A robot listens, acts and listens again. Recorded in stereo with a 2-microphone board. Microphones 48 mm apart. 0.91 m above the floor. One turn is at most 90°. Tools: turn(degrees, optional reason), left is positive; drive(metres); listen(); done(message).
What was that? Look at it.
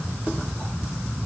listen()
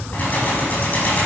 turn(degrees=30, reason="The keys jangling: about 30° left or 150° left.")
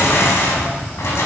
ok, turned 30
turn(degrees=90, reason="So it is at 120° left.")
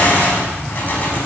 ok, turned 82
turn(degrees=40, reason="The keys jangling is now 40° left.")
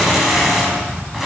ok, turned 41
done("Facing the keys jangling, over 4 m away.")